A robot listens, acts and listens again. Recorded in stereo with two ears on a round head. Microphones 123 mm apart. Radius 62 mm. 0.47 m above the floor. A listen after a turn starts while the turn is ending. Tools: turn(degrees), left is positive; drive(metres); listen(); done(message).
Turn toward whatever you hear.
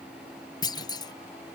turn(degrees=35)
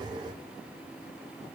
listen()
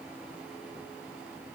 done("I heard a clunk, but can't make it out now. It was about straight ahead or 110° left.")